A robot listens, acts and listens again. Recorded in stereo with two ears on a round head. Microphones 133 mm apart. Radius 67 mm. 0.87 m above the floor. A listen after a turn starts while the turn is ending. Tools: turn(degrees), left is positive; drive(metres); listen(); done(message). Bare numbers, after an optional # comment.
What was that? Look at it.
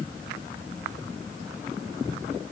listen()
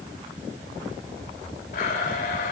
# The blender: about 65° left or 115° left.
turn(65)
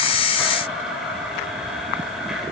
done("Facing the blender.")